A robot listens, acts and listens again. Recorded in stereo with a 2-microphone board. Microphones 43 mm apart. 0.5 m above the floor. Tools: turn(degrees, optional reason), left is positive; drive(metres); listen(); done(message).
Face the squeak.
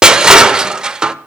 listen()
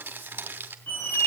turn(degrees=50, reason="The squeak: about 50° left or 130° left.")
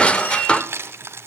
listen()
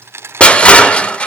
listen()
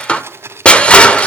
done("I heard a squeak, but can't make it out now. It was about straight ahead or 80° left.")